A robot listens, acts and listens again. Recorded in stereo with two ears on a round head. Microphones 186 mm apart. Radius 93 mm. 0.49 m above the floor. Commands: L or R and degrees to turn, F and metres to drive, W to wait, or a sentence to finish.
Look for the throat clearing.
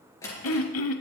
L70
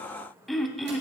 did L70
Found it: throat clearing, straight ahead.